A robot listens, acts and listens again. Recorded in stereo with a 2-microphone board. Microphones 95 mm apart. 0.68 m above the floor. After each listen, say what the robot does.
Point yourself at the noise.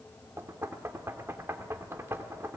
Turn 30° right.
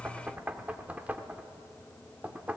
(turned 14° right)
Turn 15° right.
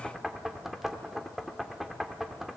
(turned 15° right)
Found it: knocking, straight ahead.